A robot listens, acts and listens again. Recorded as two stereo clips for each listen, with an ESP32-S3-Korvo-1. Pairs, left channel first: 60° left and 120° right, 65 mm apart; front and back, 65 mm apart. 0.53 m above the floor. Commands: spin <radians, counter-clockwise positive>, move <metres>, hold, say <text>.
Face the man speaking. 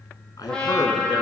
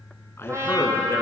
spin 0.79
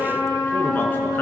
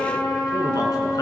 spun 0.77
hold
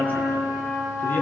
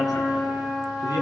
hold
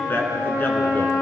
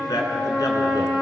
say Found it: a man speaking, straight ahead.